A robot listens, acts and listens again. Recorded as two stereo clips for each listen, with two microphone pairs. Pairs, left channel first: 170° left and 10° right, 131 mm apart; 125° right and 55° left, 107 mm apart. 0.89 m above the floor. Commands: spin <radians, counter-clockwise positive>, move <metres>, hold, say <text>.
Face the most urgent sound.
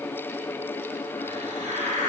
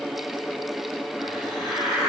hold
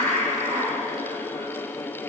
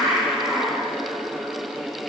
hold
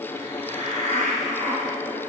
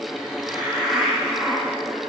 say I can't make out anything urgent to turn to.